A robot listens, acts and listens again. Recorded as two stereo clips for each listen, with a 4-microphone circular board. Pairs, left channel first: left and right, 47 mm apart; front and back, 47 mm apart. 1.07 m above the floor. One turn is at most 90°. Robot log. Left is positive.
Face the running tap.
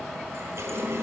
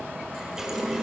note: The running tap: 100° right.
cmd yaw -90
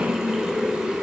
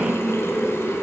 note: The running tap is now 15° right.
cmd yaw -15
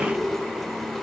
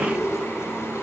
end: Facing the running tap, 2 to 4 m away.